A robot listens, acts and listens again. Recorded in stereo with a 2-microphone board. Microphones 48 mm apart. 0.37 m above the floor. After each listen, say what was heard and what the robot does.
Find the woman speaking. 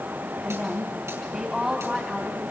Turn 30° right.
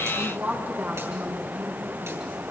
So it is at 140° right. Turn 140° right.
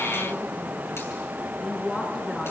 Facing the woman speaking, over 4 m away.